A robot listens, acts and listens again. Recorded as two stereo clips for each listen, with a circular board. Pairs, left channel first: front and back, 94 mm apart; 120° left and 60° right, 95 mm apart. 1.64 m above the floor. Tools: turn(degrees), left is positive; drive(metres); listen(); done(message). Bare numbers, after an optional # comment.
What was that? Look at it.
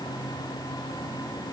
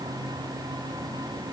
listen()
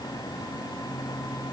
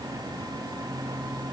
listen()
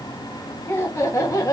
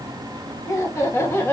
# The laughter: 55° left.
turn(55)
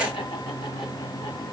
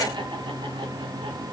listen()
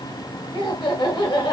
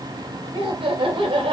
# The laughter is now 40° right.
turn(-40)
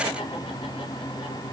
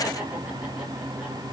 listen()
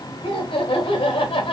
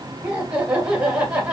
# The laughter is now 20° left.
turn(20)
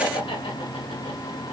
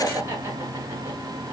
done("Facing the laughter, 1 to 2 m away.")